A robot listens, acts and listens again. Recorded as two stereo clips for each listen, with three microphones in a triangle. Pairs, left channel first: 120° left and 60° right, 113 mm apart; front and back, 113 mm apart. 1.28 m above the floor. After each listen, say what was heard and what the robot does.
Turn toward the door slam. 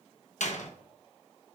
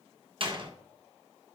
The door slam: 135° left. Turn 135° left.
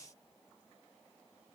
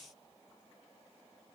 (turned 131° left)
Facing where the door slam came from. I can't hear it now.